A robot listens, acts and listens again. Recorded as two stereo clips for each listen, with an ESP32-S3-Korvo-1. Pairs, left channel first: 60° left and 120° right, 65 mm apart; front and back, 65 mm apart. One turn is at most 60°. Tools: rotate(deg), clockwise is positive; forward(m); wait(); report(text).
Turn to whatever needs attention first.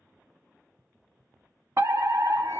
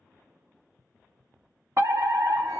rotate(60)
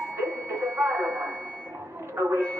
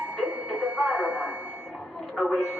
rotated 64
rotate(60)
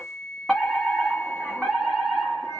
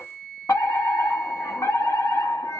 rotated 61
rotate(25)
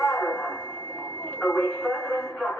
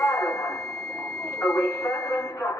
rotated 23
report("Found it: a fire alarm, straight ahead.")